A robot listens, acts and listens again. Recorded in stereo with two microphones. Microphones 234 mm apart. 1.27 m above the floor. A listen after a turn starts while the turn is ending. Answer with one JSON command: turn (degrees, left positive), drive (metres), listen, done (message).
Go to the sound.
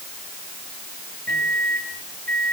{"turn": -40}
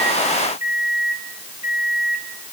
{"turn": -95}
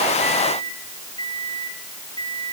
{"turn": 20}
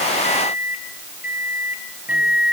{"drive": 1.0}
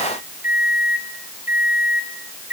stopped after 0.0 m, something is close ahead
{"turn": -10}
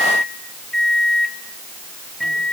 {"done": "Something is in my way. I am facing the microwave but have not reached it."}